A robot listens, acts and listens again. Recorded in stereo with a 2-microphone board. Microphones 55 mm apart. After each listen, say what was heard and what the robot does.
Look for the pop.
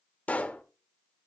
The pop: about 25° left or 155° left. Turn 25° left.
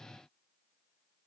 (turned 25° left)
Keep listening.
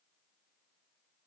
I heard a pop, but can't make it out now. It was about straight ahead or 130° left.